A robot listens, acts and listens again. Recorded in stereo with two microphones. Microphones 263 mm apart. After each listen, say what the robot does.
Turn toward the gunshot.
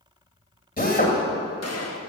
Turn 70° left.
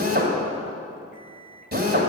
Keep listening.
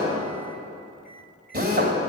I heard a gunshot, but can't make it out now. It was about straight ahead or 40° left.